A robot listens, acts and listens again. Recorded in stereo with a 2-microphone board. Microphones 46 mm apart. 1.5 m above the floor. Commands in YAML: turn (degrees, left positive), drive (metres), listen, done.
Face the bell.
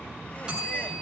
turn: -20
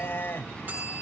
turn: -140
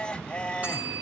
listen: true
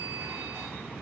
listen: true
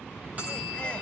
turn: -35
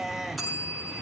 done: "Facing the bell, over 4 m away."